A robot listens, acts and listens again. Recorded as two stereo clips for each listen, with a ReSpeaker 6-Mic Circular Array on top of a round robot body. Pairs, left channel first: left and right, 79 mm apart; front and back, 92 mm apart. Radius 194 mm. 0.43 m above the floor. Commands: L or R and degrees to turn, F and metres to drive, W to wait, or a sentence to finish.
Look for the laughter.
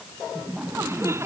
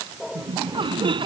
R150
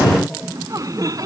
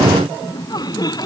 R45
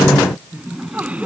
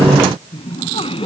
R15
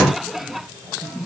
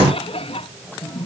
Found it: laughter, straight ahead.